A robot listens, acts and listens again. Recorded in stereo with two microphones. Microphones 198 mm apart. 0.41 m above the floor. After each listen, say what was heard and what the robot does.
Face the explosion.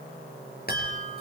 Keep listening.
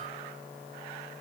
Keep listening.
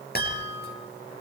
I can't make out an explosion, only a chime.